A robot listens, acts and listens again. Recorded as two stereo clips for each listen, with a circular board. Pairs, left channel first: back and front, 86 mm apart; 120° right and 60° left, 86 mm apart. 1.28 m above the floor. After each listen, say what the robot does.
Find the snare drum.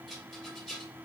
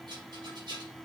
Keep listening.
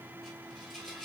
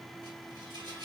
Keep listening.
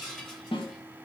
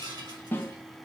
Turn 175° left.
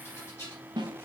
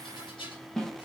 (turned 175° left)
Turn 35° right.
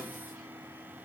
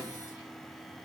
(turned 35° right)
Keep listening.
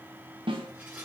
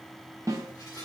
Turn 10° left.
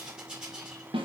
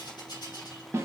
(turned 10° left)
Found it: a snare drum, straight ahead, 1 to 2 m away.